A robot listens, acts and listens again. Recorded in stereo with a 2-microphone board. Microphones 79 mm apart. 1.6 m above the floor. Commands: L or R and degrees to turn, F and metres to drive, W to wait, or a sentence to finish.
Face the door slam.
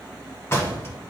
L30
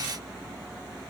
W
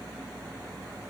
I heard a door slam, but can't make it out now. It was about straight ahead or 120° left.